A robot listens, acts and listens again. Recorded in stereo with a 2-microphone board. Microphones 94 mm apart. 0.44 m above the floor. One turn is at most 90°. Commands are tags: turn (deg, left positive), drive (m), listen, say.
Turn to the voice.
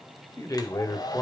<turn deg="35"/>
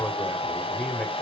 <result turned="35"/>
<turn deg="10"/>
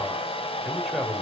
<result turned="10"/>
<say>Found it: a man speaking, straight ahead, 1 to 2 m away.</say>